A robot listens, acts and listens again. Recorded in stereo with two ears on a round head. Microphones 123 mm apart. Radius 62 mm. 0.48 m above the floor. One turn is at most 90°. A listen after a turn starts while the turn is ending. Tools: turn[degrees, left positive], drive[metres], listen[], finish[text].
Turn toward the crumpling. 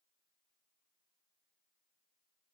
Action: listen[]
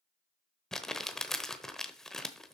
Action: turn[30]
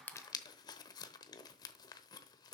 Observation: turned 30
Thought: So it is at 145° left.
Action: turn[90]
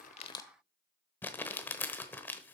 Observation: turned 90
Thought: The crumpling is now 15° left.
Action: turn[15]
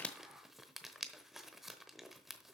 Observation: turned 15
Action: finish[Found it: crumpling, straight ahead.]